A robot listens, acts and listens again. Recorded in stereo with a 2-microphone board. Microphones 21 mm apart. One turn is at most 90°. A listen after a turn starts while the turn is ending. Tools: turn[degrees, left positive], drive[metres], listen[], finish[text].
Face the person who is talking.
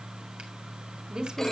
Thought: The woman speaking: about 40° right or 140° right.
Action: turn[-40]
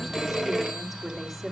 Action: finish[Found it: a woman speaking, straight ahead, 2 to 4 m away.]